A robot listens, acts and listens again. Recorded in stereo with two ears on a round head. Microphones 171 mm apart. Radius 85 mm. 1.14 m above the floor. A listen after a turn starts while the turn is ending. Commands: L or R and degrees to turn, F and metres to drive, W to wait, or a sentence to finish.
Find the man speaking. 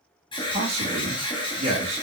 R30
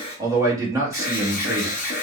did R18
R15
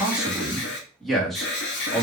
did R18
Facing the man speaking.